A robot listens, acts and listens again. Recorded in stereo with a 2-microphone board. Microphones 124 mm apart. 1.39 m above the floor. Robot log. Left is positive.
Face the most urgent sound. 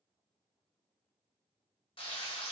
cmd idle
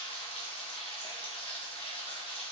cmd idle
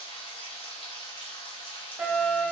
cmd yaw -30
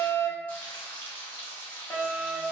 note: So it is at 25° left.
cmd yaw +25
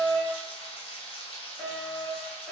end: Found it: a fire alarm, straight ahead, 1 to 2 m away.